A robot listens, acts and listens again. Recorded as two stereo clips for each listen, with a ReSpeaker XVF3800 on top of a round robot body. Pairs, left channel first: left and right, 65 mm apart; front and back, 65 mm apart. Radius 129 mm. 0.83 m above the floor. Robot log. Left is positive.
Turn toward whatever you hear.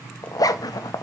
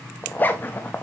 note: The zipper: 65° left.
cmd yaw +65
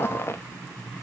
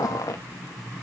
note: The zipper is now 35° left.
cmd yaw +35
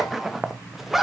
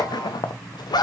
end: Facing the zipper.